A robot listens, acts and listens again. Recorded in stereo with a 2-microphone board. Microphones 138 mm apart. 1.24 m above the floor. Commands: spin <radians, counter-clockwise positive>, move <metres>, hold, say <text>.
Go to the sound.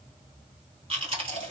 spin -0.79
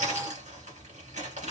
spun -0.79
spin -1.48
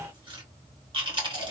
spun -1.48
spin -0.70
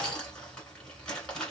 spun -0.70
spin 0.17
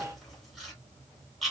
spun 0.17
move 1.0
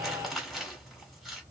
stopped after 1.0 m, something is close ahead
say Arrived at the chewing, straight ahead.